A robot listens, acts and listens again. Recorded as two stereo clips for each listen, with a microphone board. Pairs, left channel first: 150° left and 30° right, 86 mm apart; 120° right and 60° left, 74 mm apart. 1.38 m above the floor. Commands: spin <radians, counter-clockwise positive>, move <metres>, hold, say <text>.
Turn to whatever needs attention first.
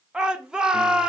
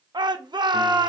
spin 0.87
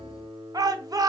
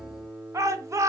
spin 0.26
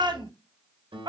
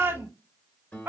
say Found it: a shout, straight ahead, under 1 m away.